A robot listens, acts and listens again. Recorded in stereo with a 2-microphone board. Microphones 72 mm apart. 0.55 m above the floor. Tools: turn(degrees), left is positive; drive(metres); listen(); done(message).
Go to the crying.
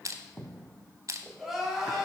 turn(degrees=-30)
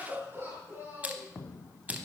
turn(degrees=-145)
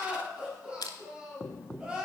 turn(degrees=-15)
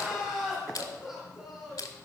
drive(metres=1.0)
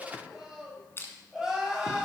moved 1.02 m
drive(metres=1.0)
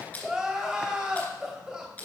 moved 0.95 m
turn(degrees=-10)
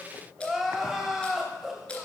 drive(metres=1.0)
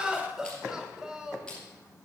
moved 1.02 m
turn(degrees=-10)
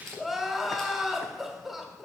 drive(metres=1.0)
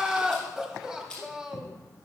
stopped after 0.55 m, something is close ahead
done("Arrived at the crying, straight ahead.")